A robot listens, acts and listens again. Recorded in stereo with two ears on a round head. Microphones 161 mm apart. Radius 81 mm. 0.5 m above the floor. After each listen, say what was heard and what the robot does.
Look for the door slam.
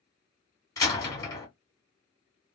The door slam: about 20° left or 160° left. Turn 20° left.
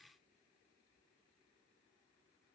Keep listening.
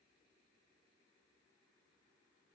I heard a door slam, but can't make it out now. It was about straight ahead or 140° left.